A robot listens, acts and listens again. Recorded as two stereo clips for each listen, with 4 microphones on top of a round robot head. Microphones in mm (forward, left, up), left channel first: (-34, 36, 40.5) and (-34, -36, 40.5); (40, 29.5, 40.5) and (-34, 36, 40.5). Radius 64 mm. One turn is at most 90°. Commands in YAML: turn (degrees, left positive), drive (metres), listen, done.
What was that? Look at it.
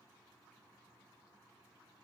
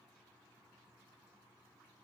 listen: true
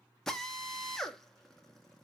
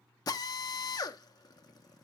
done: "Facing the drill."